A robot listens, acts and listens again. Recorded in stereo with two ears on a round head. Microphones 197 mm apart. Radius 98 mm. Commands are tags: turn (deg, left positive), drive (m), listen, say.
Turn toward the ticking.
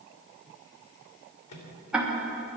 <turn deg="-30"/>
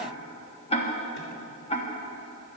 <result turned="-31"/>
<turn deg="25"/>
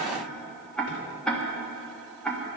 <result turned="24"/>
<say>Facing the ticking, 1 to 2 m away.</say>